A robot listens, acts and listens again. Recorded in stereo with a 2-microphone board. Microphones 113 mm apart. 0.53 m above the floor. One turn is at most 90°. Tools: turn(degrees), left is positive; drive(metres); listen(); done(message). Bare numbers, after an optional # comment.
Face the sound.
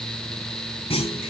# The clunk: about 65° left or 115° left.
turn(65)
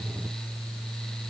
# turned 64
listen()
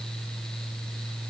done("I heard a clunk, but can't make it out now. It was about straight ahead or 50° left.")